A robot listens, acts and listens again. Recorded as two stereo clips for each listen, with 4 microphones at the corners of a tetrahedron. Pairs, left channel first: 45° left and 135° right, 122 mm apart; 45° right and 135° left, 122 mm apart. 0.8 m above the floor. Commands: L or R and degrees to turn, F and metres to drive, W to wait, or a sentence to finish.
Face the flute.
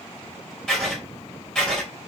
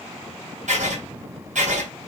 W
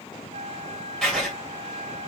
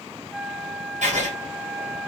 R140
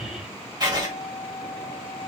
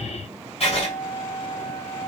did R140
L10
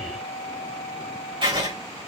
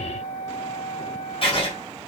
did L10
Facing the flute, under 1 m away.